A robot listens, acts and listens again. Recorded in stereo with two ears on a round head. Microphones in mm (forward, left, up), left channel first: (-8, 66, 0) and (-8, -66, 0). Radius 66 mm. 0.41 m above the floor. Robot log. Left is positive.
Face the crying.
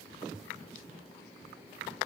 cmd idle
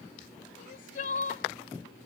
note: The crying: about 60° left or 120° left.
cmd yaw +60
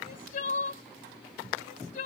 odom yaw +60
note: So it is at 55° left.
cmd yaw +55
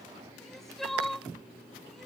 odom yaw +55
end: Found it: crying, straight ahead.